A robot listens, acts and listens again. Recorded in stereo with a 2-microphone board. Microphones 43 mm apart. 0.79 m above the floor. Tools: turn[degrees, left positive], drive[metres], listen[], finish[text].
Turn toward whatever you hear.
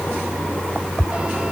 Action: listen[]
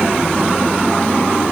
Action: listen[]
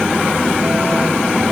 Action: finish[I can't make out anything.]